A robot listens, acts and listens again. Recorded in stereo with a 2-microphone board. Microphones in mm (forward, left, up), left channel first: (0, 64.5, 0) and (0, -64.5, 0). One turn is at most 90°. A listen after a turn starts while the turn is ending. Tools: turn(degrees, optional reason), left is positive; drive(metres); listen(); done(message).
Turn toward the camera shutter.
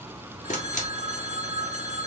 turn(degrees=75, reason="The camera shutter: about 75° left or 105° left.")
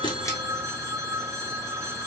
listen()
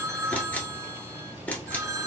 turn(degrees=10, reason="So it is at 10° left.")
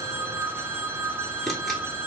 listen()
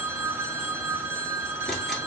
listen()
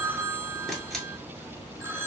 done("Facing the camera shutter, 1 to 2 m away.")